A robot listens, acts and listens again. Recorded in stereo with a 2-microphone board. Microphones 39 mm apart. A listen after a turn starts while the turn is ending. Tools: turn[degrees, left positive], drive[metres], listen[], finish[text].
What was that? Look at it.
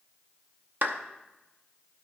Thought: The clap: about 60° right or 120° right.
Action: turn[-60]
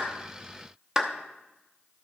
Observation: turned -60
Thought: So it is at 20° right.
Action: turn[-20]
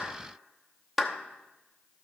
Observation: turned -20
Action: finish[Found it: a clap, straight ahead, under 1 m away.]